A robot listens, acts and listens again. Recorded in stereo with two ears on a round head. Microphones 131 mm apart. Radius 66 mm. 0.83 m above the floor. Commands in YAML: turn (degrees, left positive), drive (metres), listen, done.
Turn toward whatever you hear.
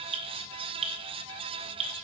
turn: -45
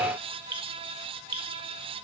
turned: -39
turn: -95
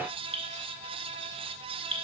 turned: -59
turn: -40
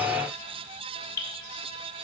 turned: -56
turn: 20
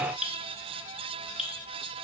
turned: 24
done: "Facing the dripping, 1 to 2 m away."